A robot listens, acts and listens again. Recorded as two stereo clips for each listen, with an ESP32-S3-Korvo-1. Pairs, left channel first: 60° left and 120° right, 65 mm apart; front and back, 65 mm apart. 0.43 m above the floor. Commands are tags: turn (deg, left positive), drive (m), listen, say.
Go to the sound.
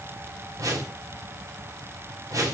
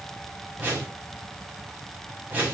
<turn deg="-120"/>
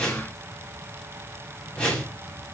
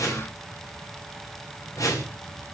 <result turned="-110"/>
<turn deg="-10"/>
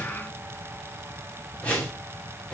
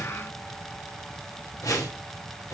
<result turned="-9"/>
<drive m="1.0"/>
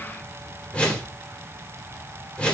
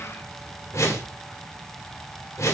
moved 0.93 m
<drive m="1.0"/>
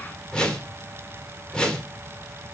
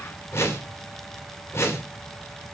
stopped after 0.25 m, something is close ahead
<say>Arrived at the whoosh, straight ahead.</say>